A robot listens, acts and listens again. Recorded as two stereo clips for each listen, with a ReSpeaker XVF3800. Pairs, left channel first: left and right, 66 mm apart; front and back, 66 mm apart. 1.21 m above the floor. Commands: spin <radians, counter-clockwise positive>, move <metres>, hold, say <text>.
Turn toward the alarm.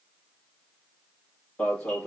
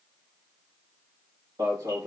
spin 2.88
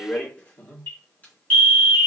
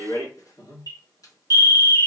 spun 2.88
spin 0.44
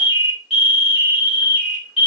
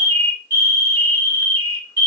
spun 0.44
spin -0.17
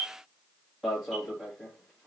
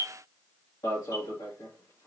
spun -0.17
say Found it: an alarm, straight ahead.